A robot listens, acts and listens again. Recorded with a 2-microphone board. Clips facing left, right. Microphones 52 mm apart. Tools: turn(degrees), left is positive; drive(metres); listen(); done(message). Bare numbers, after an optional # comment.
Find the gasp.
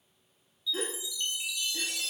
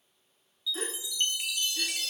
# The gasp: about 45° left or 135° left.
turn(45)
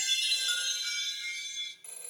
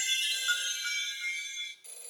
listen()
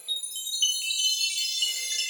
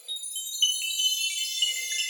done("I heard a gasp, but can't make it out now. It was about straight ahead or 90° left.")